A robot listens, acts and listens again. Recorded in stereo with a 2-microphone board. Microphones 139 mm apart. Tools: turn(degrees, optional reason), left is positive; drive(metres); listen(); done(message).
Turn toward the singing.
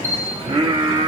turn(degrees=-45, reason="The singing: about 45° right or 135° right.")
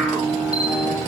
turn(degrees=15, reason="So it is at 15° left.")
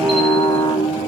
turn(degrees=40, reason="The singing is now 40° left.")
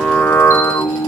turn(degrees=25, reason="The singing is now 25° left.")
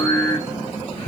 turn(degrees=30, reason="The singing is now 30° left.")
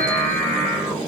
turn(degrees=25, reason="The singing is now 25° left.")
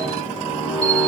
done("Found it: singing, straight ahead, 2 to 4 m away.")